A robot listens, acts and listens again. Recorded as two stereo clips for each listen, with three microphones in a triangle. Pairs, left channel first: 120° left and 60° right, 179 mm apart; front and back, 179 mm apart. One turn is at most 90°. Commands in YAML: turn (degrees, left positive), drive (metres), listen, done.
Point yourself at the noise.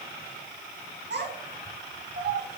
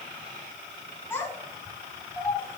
turn: -75
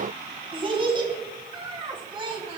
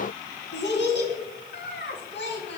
done: "Facing the child speaking, 2 to 4 m away."